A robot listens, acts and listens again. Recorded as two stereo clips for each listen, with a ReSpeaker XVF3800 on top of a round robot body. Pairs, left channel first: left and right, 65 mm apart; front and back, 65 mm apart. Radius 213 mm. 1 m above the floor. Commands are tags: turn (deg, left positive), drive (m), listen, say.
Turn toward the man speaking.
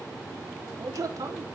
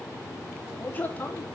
<turn deg="-60"/>
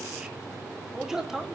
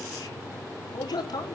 <say>Found it: a man speaking, straight ahead.</say>